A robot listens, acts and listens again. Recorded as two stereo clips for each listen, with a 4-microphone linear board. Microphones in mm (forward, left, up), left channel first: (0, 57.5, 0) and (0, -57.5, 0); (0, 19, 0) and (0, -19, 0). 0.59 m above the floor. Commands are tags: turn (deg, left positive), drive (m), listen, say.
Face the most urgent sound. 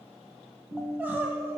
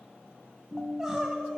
<turn deg="-15"/>
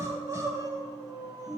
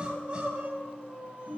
<turn deg="-150"/>
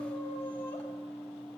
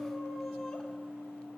<listen/>
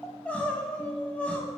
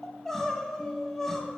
<turn deg="10"/>
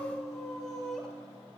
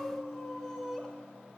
<say>Found it: crying, straight ahead, under 1 m away.</say>